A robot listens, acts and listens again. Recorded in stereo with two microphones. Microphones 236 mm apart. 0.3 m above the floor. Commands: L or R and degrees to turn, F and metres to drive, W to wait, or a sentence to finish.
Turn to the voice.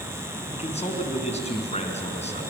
L30
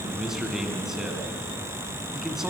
Found it: a man speaking, straight ahead, 2 to 4 m away.